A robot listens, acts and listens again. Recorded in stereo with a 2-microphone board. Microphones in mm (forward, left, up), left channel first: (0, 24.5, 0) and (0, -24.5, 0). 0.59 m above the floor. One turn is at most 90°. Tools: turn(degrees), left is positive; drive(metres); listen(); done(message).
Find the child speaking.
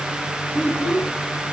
turn(degrees=30)
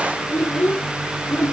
turn(degrees=90)
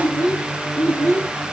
turn(degrees=45)
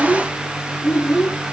done("Facing the child speaking, over 4 m away.")